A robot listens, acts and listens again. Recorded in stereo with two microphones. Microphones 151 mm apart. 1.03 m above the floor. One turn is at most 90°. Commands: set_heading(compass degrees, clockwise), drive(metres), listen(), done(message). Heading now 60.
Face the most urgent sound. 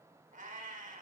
listen()
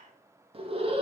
set_heading(100)
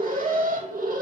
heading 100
set_heading(190)
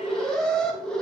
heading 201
done("Facing the alarm.")